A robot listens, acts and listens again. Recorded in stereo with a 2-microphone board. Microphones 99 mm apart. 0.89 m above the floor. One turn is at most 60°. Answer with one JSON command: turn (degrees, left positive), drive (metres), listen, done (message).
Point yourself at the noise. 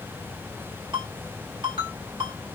{"turn": -55}
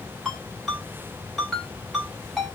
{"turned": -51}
{"done": "Found it: a ringtone, straight ahead."}